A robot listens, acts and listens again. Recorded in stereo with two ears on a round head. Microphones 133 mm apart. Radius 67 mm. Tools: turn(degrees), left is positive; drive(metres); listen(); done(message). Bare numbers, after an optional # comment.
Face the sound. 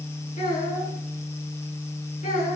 # The child speaking: about 45° left or 135° left.
turn(45)
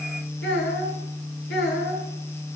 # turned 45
# So it is at 90° left.
turn(90)
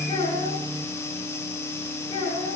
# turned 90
# The child speaking is now 30° left.
turn(30)
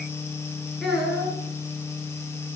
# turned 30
done("Facing the child speaking.")